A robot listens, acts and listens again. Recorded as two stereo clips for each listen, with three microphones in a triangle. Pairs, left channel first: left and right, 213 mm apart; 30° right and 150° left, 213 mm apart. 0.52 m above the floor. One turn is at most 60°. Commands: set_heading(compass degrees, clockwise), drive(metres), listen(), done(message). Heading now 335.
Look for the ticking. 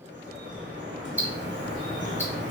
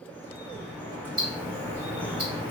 set_heading(35)
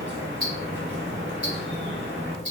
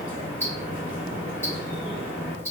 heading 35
set_heading(95)
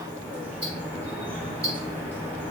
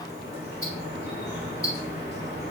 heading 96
set_heading(146)
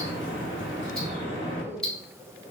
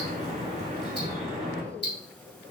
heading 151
done("Facing the ticking.")